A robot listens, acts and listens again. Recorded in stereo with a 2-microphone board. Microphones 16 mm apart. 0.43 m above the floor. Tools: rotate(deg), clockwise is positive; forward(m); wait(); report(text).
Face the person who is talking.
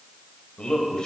rotate(-55)
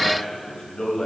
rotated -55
rotate(-40)
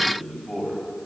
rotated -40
report("Found it: a man speaking, straight ahead, 2 to 4 m away.")